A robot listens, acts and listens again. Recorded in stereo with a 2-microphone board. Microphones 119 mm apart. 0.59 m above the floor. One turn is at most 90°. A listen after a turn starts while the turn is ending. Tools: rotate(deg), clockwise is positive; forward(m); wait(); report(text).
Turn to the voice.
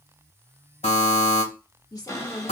rotate(-35)
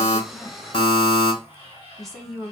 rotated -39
report("Facing the woman speaking.")